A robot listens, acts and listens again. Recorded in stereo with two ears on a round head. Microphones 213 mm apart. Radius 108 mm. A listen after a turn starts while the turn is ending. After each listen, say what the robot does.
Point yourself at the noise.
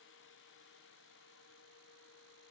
Keep listening.
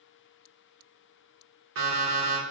Turn 55° right.
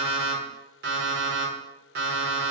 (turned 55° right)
Turn 50° right.
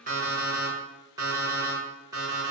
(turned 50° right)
Turn 15° right.
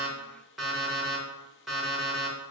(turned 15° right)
Found it: an alarm clock, straight ahead, 1 to 2 m away.